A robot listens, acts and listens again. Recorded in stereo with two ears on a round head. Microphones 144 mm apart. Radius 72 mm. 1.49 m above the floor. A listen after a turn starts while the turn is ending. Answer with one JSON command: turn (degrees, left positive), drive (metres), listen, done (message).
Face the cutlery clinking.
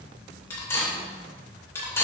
{"turn": 15}
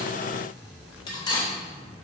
{"turn": 150}
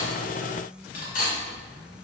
{"turn": 55}
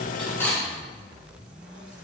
{"done": "Facing the cutlery clinking, 2 to 4 m away."}